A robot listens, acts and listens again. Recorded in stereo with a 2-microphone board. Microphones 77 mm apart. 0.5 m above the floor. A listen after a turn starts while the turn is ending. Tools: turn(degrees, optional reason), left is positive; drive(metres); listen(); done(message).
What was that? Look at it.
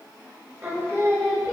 turn(degrees=-35, reason="The singing: about 35° right or 145° right.")
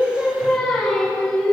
done("Facing the singing.")